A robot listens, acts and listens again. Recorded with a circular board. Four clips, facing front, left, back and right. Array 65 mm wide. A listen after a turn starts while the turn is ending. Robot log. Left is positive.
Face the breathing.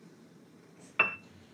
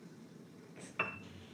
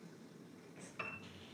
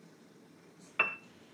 note: The breathing: 110° left.
cmd yaw +110
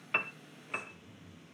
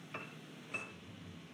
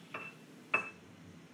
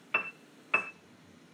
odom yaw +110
note: The breathing is now 25° left.
cmd yaw +25
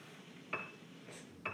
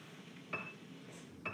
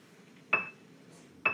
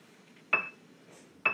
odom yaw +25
cmd idle
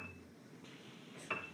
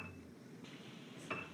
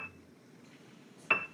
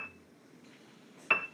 end: Found it: breathing, straight ahead, over 4 m away.